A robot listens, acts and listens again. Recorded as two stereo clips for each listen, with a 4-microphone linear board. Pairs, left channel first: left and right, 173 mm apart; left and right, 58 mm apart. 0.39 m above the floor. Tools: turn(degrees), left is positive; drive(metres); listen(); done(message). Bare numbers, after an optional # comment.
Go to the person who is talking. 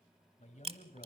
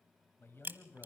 # The man speaking: about 45° left or 135° left.
turn(45)
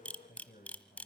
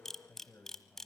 # So it is at 75° left.
turn(75)
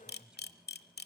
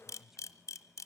drive(1.0)
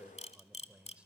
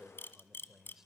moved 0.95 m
# The man speaking is now 10° right.
turn(-10)
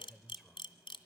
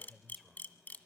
drive(1.0)
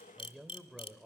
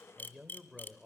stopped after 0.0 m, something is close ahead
done("Arrived at the man speaking, straight ahead.")